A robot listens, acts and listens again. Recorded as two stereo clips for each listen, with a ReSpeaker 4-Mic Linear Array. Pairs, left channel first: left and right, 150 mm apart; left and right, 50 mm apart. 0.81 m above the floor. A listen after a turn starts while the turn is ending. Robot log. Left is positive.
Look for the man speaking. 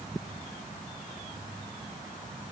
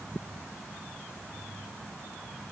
cmd idle
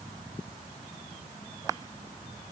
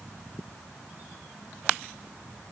cmd idle
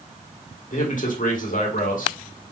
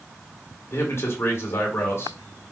note: The man speaking: about 60° left or 120° left.
cmd yaw +60
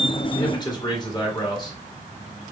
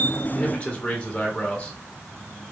note: So it is at 35° left.
cmd yaw +35
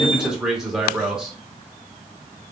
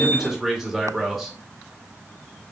end: Found it: a man speaking, straight ahead, 1 to 2 m away.